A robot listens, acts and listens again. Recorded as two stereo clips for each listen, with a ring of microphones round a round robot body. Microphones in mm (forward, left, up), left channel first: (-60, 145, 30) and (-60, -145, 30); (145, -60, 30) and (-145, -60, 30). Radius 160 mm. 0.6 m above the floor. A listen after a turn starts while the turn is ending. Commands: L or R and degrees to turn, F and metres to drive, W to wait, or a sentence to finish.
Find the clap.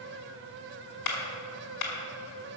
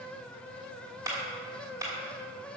L100
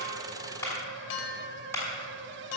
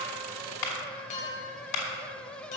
Facing the clap.